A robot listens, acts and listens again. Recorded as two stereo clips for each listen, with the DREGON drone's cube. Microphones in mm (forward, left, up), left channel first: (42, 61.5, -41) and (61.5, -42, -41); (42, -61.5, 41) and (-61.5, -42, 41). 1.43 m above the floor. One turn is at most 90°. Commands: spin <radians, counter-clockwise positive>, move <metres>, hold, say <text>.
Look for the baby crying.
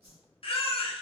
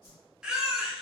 spin 1.57
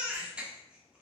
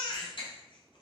say Facing the baby crying.